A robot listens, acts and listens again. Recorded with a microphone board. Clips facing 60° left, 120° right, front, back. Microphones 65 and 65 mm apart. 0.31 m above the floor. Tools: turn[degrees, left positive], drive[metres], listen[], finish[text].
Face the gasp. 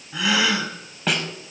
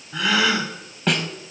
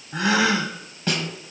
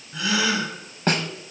Thought: The gasp: 25° right.
Action: turn[-25]
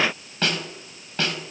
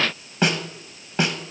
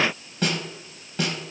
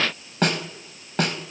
Action: finish[I heard a gasp from this way, but can't make it out now.]